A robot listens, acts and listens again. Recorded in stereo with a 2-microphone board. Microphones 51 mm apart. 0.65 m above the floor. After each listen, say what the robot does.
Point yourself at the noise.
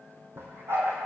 Turn 55° right.
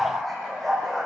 Turn 10° left.
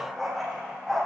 Found it: a dog barking, straight ahead.